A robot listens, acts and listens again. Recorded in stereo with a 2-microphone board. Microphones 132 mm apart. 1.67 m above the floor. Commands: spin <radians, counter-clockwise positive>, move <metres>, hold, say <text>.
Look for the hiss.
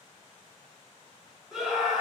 hold
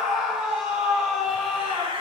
spin -0.79
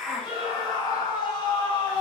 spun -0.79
say Found it: a hiss, straight ahead.